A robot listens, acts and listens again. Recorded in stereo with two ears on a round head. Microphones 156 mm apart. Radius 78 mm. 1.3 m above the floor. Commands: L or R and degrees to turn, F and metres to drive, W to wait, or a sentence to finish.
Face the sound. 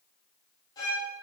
L25
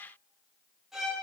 Facing the violin.